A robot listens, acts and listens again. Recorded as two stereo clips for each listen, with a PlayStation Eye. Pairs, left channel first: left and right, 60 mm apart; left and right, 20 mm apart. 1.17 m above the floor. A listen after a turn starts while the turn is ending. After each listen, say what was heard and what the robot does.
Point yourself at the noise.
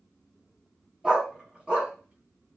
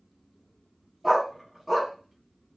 The dog barking: about 15° right or 165° right. Turn 15° right.
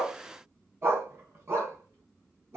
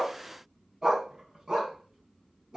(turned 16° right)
So it is at 130° right. Turn 130° right.
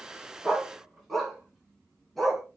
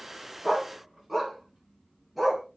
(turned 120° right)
Found it: a dog barking, straight ahead, over 4 m away.